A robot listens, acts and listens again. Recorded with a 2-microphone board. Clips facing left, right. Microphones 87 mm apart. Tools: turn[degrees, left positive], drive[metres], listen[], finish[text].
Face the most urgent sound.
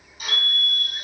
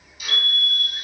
Thought: The fire alarm: about 35° right or 145° right.
Action: turn[-35]
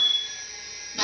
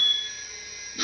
Thought: So it is at 10° right.
Action: turn[-10]
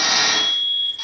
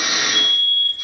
Action: finish[Facing the fire alarm, 2 to 4 m away.]